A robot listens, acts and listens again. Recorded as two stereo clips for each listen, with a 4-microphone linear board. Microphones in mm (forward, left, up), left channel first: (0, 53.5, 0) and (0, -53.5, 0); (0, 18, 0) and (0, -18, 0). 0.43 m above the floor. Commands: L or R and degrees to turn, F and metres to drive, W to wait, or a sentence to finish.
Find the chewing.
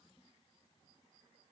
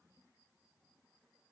W
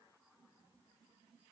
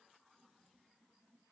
W
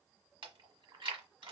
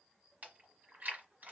R50
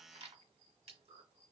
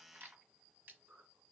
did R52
R80
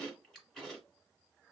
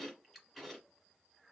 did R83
Found it: chewing, straight ahead, 1 to 2 m away.